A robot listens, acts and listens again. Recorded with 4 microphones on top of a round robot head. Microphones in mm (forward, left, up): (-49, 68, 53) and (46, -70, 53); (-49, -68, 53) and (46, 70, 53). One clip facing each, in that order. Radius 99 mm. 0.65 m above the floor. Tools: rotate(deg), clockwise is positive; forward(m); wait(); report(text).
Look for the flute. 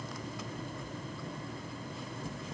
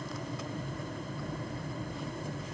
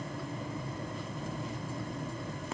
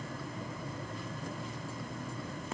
wait()
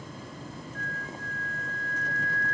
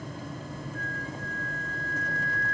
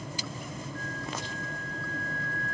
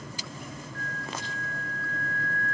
report("Found it: a flute, straight ahead.")